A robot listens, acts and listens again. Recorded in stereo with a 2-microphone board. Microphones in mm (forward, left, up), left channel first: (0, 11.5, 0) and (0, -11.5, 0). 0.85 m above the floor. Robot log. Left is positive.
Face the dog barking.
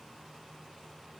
cmd idle
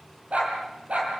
cmd yaw -90
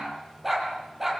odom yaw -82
note: So it is at 10° right.
cmd yaw -10
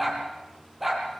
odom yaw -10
end: Facing the dog barking.